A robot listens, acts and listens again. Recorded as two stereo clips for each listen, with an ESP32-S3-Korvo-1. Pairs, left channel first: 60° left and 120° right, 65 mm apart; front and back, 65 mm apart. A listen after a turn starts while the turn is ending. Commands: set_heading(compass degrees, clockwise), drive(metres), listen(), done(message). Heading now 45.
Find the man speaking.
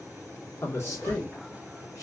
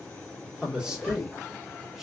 set_heading(305)
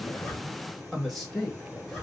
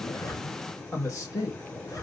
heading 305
set_heading(335)
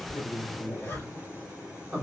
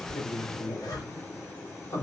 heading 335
set_heading(350)
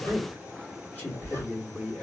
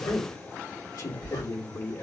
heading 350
set_heading(0)
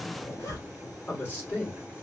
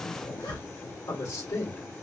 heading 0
done("Facing the man speaking, 2 to 4 m away.")